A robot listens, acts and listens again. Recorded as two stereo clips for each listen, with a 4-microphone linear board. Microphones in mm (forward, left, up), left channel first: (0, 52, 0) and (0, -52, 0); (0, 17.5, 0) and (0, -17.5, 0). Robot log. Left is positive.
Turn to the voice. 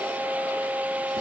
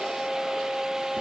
cmd idle
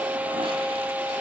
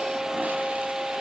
cmd idle
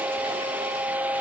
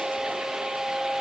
end: I can't make out anyone speaking.